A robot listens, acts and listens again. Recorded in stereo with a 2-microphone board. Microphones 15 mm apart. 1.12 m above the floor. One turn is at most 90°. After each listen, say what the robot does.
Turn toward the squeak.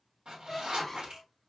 Turn 20° left.
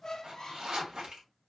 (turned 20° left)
Turn 90° left.
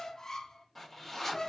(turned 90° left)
Turn 45° left.
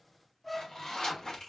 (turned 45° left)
Turn 10° left.
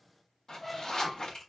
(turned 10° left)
Found it: a squeak, straight ahead, under 1 m away.